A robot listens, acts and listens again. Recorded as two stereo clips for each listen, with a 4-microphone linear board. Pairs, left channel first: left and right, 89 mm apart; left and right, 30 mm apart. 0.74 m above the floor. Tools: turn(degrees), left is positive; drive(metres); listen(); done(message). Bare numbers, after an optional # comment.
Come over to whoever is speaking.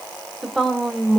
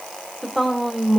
turn(30)
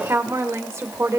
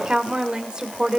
# So it is at 30° right.
turn(-30)
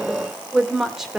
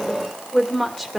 drive(1.0)
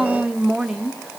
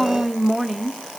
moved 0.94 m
drive(1.0)
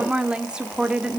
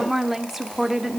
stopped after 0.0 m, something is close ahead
# The woman speaking is now 10° right.
turn(-10)
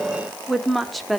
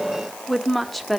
done("Arrived at the woman speaking, straight ahead.")